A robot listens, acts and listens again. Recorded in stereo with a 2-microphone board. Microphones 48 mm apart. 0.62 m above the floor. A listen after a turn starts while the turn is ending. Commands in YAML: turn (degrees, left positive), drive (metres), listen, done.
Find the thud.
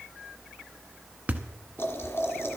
turn: -35
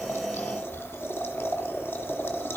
listen: true
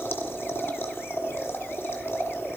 done: "I heard a thud, but can't make it out now. It was about straight ahead or 110° right."